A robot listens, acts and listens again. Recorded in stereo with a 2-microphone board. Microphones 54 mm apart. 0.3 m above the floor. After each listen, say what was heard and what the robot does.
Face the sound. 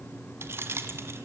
The keys jangling: about 50° right or 130° right. Turn 50° right.
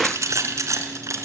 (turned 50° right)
So it is at 65° right. Turn 65° right.
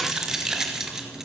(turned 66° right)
The keys jangling is now 10° right. Turn 10° right.
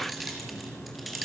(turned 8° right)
Found it: keys jangling, straight ahead, over 4 m away.